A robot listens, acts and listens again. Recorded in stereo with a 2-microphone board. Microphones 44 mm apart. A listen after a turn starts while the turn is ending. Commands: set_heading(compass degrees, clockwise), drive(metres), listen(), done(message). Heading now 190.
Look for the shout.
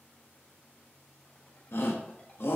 set_heading(130)
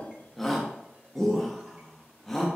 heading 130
set_heading(120)
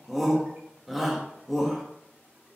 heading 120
done("Facing the shout.")